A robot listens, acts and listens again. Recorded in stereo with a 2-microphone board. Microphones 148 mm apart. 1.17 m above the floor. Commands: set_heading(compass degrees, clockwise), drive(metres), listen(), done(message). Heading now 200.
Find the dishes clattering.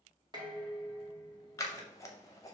set_heading(230)
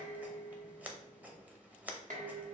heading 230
set_heading(345)
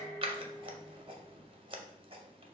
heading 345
set_heading(330)
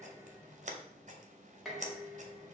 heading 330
done("Facing the dishes clattering.")